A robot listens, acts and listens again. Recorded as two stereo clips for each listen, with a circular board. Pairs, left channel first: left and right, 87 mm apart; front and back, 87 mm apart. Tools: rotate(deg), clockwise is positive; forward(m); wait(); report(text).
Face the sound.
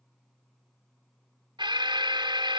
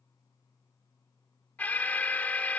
rotate(70)
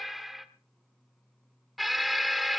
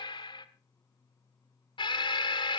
report("Found it: an alarm, straight ahead.")